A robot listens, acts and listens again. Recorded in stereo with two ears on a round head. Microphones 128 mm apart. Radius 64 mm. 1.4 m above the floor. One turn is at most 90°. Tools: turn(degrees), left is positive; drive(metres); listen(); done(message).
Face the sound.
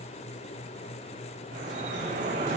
turn(degrees=-60)
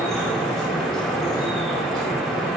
done("Found it: dripping, straight ahead.")